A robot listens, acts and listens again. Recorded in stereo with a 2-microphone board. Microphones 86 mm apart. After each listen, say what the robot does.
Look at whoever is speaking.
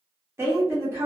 Turn 30° right.
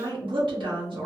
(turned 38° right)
Turn 110° right.
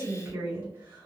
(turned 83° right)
Turn 30° right.
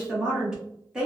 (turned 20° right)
Turn 10° right.
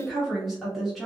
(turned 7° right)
Facing the woman speaking, 1 to 2 m away.